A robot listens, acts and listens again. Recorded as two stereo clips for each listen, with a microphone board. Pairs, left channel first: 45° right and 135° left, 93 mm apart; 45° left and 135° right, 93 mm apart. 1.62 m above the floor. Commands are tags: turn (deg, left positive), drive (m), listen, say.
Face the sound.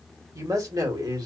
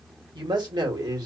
<turn deg="180"/>
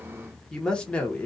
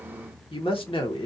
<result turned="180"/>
<turn deg="30"/>
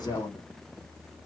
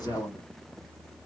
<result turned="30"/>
<say>Facing the woman speaking, 1 to 2 m away.</say>